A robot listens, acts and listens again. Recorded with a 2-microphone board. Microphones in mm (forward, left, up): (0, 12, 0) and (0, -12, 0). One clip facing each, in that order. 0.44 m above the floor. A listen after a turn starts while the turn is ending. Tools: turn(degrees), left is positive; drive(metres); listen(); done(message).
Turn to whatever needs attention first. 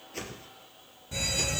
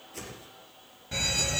turn(degrees=-35)
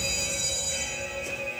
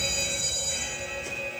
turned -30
done("Facing the fire alarm.")